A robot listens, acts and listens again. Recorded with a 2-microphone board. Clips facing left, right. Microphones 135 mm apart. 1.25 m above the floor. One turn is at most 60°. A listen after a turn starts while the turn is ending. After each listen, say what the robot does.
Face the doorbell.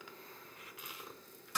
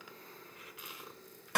Keep listening.
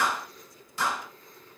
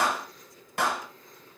Keep listening.
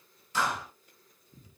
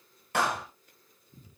I can't make out a doorbell, only a clap.